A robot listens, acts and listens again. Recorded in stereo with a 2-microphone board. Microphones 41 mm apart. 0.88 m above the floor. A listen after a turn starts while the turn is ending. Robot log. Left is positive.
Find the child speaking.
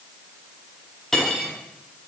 cmd idle
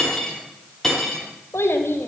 cmd yaw +90
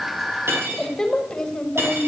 note: So it is at 20° left.
cmd yaw +20
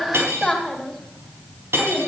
note: The child speaking is now 10° left.
cmd yaw +10
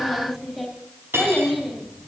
end: Found it: a child speaking, straight ahead, 2 to 4 m away.